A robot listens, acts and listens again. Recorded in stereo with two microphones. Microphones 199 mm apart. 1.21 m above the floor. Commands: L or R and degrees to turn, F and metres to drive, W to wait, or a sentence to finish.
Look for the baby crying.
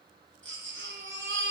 R75
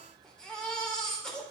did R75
Facing the baby crying.